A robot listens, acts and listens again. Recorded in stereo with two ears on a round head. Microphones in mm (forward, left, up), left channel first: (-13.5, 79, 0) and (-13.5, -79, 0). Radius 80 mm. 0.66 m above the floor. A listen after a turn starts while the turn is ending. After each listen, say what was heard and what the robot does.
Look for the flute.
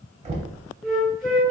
Turn 30° left.
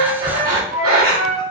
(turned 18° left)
So it is at 15° right. Turn 15° right.
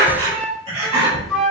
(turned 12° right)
Found it: a flute, straight ahead, 1 to 2 m away.